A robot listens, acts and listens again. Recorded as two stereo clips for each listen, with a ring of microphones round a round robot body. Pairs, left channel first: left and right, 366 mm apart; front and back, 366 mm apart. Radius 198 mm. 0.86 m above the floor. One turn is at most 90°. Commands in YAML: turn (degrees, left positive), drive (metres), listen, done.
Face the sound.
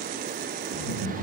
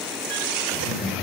turn: -90
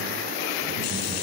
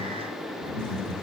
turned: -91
done: "Facing the laughter."